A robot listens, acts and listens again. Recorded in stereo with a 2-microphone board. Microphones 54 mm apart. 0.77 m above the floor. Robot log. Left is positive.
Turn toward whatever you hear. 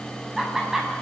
cmd yaw -30
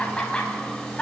note: So it is at 15° left.
cmd yaw +15
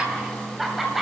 end: Facing the laughter, 2 to 4 m away.